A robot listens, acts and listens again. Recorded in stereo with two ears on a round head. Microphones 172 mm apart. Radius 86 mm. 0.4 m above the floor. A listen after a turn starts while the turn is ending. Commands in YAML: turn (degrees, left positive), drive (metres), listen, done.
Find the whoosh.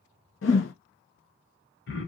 turn: 70
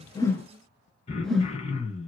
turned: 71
done: "Facing the whoosh, under 1 m away."